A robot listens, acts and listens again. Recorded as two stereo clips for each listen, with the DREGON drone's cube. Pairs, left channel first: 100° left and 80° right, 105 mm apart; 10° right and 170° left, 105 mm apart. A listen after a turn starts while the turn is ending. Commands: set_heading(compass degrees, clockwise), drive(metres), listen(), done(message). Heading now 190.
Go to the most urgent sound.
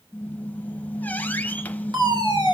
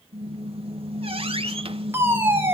set_heading(315)
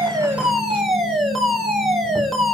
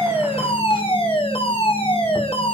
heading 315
set_heading(305)
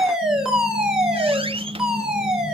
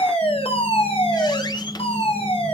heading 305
drive(1.0)
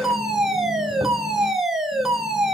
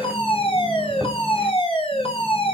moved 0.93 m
set_heading(295)
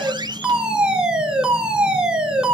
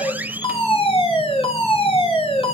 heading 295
drive(1.0)
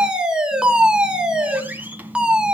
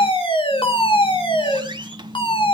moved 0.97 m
drive(1.0)
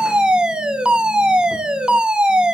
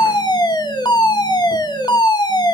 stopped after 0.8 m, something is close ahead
done("I am next to the fire alarm.")